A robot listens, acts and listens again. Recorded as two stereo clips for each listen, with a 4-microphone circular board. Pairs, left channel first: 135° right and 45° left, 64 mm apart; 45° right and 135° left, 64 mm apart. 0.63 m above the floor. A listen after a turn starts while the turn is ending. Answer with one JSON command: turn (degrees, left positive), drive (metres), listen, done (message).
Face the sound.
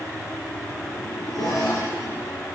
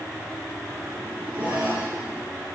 {"turn": -165}
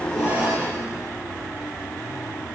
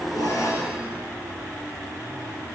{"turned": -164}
{"done": "Found it: a zipper, straight ahead."}